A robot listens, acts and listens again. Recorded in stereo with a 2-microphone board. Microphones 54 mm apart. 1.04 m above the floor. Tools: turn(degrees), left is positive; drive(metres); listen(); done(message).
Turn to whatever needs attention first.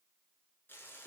listen()
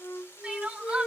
turn(degrees=-20)
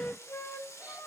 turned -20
listen()
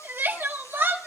turn(degrees=-135)
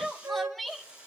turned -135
done("Found it: crying, straight ahead.")